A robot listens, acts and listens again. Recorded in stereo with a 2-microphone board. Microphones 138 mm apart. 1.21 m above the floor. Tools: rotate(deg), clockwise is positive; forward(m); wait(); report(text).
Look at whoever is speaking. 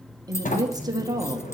rotate(30)
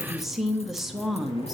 report("Facing the woman speaking, 1 to 2 m away.")